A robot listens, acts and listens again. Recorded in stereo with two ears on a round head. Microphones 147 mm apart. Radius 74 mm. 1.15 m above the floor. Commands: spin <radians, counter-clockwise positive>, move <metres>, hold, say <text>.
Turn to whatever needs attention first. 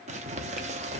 hold
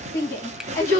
spin 0.35
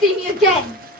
say Found it: a shout, straight ahead, 1 to 2 m away.